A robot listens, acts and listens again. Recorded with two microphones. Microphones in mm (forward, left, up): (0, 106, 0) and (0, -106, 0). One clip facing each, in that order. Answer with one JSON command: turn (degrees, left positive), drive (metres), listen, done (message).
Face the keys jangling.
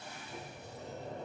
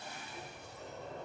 {"listen": true}
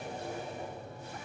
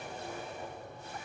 {"listen": true}
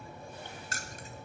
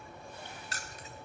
{"turn": 45}
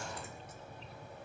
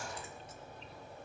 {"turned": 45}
{"listen": true}
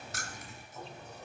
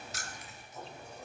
{"turn": 50}
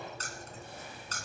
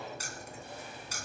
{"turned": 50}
{"turn": -10}
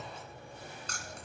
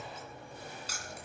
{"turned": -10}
{"done": "Facing the keys jangling, 2 to 4 m away."}